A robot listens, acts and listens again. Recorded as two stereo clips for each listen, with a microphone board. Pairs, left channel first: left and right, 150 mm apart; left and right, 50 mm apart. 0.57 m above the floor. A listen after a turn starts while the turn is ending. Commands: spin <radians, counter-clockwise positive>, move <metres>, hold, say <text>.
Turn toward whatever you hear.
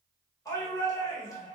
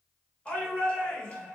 spin 0.44
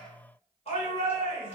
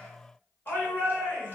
spin 2.27
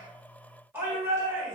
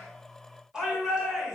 spin -0.26
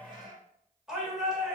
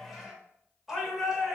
say Found it: a shout, straight ahead, 1 to 2 m away.